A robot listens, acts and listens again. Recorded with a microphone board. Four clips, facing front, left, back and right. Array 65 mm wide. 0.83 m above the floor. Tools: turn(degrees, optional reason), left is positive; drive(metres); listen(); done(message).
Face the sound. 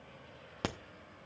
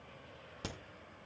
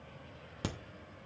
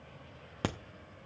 turn(degrees=-60, reason="The crack: 60° right.")
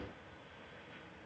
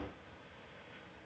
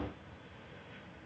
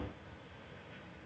done("I heard a crack from this way, but can't make it out now.")